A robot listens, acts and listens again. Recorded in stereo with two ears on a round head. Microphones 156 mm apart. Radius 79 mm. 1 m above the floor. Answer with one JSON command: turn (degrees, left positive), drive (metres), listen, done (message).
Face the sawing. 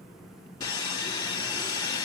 {"turn": 25}
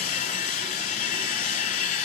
{"turn": 125}
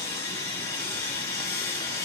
{"turn": 20}
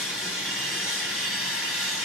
{"done": "Found it: sawing, straight ahead."}